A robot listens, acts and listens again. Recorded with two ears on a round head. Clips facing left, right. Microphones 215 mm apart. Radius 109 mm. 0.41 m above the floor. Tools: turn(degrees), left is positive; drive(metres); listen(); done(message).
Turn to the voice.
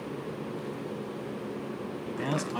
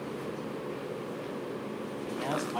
turn(degrees=25)
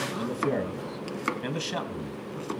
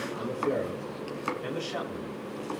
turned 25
turn(degrees=125)
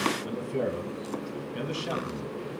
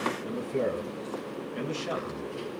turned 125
done("Facing the man speaking, 2 to 4 m away.")